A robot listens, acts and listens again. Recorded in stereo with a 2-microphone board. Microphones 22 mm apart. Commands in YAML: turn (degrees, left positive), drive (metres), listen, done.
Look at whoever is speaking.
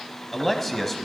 turn: 30
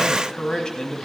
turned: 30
turn: 135
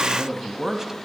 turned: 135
turn: -25
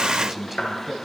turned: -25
turn: -10
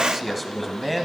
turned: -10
done: "Found it: a man speaking, straight ahead, 1 to 2 m away."